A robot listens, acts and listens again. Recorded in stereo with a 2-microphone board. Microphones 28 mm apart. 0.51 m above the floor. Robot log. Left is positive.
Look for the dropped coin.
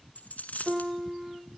note: The dropped coin: about 75° left or 105° left.
cmd yaw +75
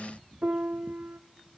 cmd idle
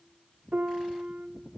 end: I heard a dropped coin, but can't make it out now. It was about straight ahead or 30° left.